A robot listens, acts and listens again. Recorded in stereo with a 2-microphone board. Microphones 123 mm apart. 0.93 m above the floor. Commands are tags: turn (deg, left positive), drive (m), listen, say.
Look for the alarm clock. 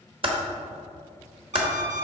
<turn deg="-60"/>
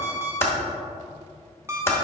<turn deg="-25"/>
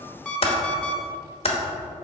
<turn deg="10"/>
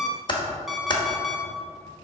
<say>Found it: an alarm clock, straight ahead, under 1 m away.</say>